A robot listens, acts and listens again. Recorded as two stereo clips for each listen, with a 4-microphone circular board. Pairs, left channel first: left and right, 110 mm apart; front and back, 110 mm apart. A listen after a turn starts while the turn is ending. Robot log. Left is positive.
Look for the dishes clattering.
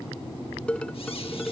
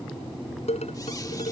note: The dishes clattering: 10° left.
cmd yaw +10
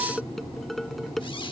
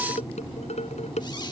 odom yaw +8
end: Found it: dishes clattering, straight ahead.